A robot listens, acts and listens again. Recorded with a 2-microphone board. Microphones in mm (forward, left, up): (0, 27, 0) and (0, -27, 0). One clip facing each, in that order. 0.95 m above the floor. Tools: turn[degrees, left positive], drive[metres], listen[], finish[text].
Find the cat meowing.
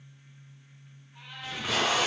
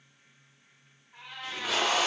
Action: turn[-90]
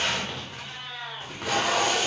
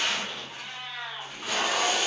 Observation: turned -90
Action: finish[Facing the cat meowing, 1 to 2 m away.]